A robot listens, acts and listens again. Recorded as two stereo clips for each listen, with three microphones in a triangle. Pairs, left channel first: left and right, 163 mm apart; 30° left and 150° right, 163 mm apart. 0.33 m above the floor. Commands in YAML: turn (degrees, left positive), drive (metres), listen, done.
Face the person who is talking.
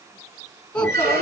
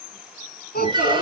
turn: 10
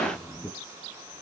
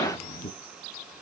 done: "Found it: a child speaking, straight ahead."